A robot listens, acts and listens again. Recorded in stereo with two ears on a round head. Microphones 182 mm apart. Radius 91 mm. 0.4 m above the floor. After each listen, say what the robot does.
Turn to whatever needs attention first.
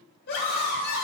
Turn 50° left.
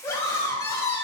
Turn 15° left.
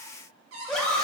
Found it: a scream, straight ahead.